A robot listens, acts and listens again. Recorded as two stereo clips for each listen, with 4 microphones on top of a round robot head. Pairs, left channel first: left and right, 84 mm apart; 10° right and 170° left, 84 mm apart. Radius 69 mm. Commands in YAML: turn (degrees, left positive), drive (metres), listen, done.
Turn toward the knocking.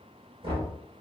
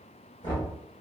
turn: -60
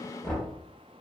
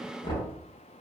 done: "Found it: knocking, straight ahead."